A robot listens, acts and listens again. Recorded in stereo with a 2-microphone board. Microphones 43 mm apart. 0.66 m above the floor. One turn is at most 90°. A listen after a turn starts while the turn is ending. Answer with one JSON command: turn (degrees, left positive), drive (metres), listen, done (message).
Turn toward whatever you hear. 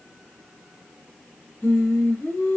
{"turn": 60}
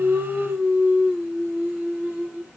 {"turn": -15}
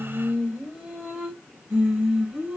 {"turn": -15}
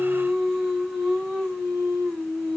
{"done": "Found it: singing, straight ahead, 2 to 4 m away."}